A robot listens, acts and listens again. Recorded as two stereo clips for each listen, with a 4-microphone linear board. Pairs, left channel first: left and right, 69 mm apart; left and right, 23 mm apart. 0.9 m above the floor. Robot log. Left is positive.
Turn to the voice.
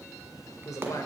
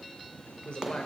note: The man speaking: about 60° left or 120° left.
cmd yaw +60
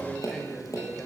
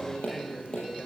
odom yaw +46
note: So it is at 15° left.
cmd yaw +15
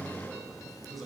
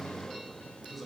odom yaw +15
end: Found it: a man speaking, straight ahead.